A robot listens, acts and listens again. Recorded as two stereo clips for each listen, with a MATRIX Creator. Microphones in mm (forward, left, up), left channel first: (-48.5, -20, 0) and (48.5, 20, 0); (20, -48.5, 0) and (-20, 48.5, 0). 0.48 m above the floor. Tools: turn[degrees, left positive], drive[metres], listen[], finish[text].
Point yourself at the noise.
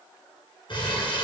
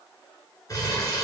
Thought: The crumpling: 120° right.
Action: turn[-120]
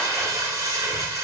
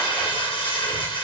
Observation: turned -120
Thought: The crumpling is now 35° right.
Action: turn[-35]
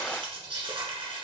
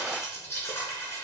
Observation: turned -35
Action: finish[Facing the crumpling, 1 to 2 m away.]